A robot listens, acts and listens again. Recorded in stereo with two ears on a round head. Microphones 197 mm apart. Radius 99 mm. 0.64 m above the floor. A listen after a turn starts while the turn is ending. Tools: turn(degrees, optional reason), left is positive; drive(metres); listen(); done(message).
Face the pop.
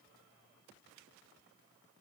listen()
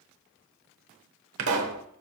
turn(degrees=-70, reason="The pop: about 70° right or 110° right.")
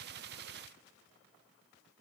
listen()
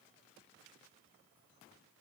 done("I heard a pop, but can't make it out now. It was about straight ahead or 40° right.")